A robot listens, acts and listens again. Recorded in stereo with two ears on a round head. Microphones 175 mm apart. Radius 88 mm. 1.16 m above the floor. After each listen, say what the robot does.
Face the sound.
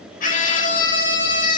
Turn 45° left.
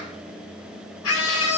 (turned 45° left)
Turn 90° left.
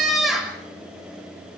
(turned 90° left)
Facing the scream, over 4 m away.